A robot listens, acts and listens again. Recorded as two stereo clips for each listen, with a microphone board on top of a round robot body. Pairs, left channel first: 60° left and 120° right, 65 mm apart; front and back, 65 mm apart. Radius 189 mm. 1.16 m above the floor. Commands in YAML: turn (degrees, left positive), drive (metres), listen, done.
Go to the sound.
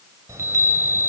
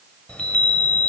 turn: -70
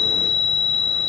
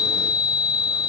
turn: -25
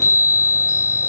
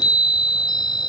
turn: 10
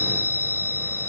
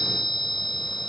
drive: 1.0
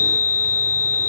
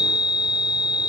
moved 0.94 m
drive: 1.0
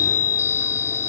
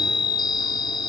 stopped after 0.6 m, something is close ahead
done: "Arrived at the chime, straight ahead."